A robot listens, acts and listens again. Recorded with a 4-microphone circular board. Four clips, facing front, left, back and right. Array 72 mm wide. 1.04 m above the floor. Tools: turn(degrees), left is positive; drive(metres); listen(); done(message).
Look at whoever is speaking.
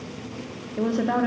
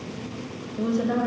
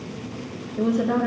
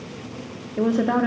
turn(degrees=-70)
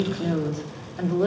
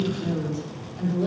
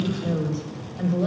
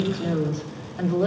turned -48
turn(degrees=-35)
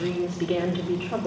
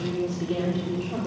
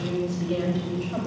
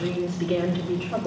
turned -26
turn(degrees=-15)
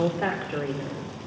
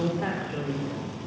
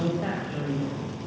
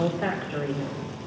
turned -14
done("Facing the woman speaking.")